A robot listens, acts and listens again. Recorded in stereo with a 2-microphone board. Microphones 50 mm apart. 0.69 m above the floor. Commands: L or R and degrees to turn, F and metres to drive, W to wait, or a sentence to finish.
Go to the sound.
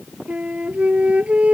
R25
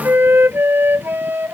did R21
R130
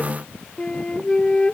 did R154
L20
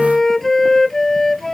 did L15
F1.0
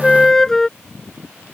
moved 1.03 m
L10
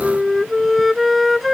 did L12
F1.0
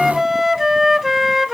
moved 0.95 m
F1.0
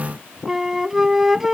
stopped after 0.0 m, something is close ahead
R10
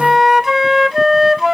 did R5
Arrived at the flute, straight ahead.